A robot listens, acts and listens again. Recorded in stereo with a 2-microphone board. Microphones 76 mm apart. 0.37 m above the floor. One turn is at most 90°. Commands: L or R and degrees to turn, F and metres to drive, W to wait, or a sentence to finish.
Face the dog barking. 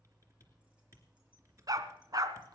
R55
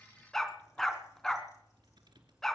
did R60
Facing the dog barking.